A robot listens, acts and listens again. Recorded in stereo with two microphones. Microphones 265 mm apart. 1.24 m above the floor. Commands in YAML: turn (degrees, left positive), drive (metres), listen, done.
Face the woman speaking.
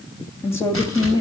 turn: 30
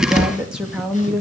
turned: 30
turn: 30
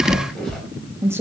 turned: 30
turn: -10
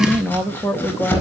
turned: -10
turn: 10
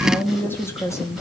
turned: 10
turn: 10
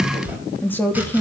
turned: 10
done: "Facing the woman speaking, 2 to 4 m away."